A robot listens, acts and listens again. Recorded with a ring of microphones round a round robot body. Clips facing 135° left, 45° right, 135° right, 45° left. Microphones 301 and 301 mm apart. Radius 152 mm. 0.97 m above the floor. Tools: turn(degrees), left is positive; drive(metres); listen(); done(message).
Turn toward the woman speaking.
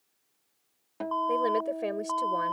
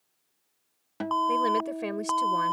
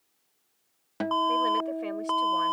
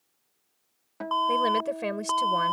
turn(degrees=25)
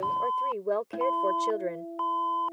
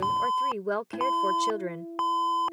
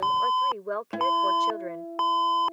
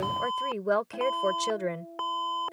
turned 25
turn(degrees=25)
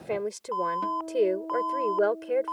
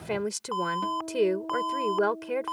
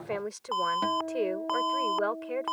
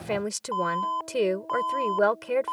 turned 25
turn(degrees=25)
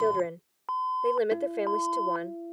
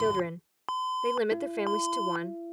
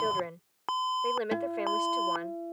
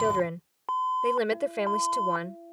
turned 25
turn(degrees=20)
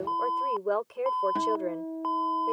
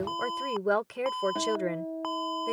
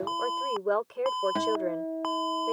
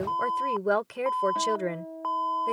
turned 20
done("Found it: a woman speaking, straight ahead.")